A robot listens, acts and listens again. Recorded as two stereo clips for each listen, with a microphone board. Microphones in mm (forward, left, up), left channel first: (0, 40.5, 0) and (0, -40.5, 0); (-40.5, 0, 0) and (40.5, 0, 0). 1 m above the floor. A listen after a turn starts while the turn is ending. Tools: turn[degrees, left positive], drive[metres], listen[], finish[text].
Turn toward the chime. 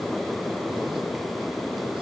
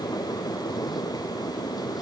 Action: listen[]
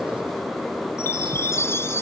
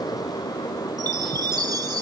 Thought: The chime: 35° left.
Action: turn[35]
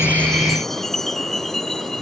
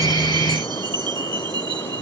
Action: finish[Found it: a chime, straight ahead.]